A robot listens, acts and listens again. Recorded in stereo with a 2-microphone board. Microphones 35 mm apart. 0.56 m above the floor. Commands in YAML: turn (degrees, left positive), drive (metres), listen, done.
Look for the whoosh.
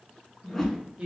turn: 30
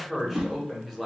turn: -25
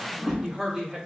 done: "Facing the whoosh, under 1 m away."